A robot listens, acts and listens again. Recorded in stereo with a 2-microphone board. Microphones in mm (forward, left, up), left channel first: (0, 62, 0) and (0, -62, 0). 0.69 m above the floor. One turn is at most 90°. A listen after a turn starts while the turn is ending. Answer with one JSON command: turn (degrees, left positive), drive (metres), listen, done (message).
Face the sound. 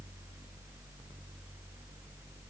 {"listen": true}
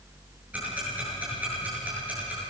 {"turn": -30}
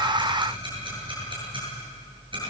{"turn": -90}
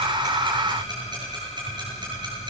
{"turn": -40}
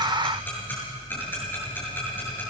{"turn": 15}
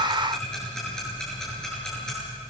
{"done": "Facing the ticking, over 4 m away."}